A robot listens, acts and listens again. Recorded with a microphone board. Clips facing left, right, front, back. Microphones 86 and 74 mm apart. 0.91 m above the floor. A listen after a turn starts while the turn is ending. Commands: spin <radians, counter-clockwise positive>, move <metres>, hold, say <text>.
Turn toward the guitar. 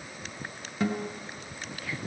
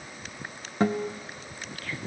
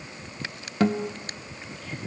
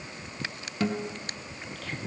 spin -0.70
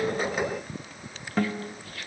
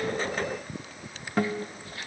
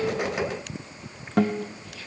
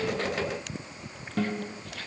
say Found it: a guitar, straight ahead.